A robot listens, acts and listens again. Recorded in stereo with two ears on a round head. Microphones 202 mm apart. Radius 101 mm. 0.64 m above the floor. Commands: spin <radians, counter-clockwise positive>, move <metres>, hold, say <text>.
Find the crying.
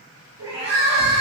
spin -1.31
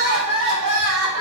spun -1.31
spin -0.44
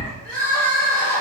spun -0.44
say Facing the crying, 1 to 2 m away.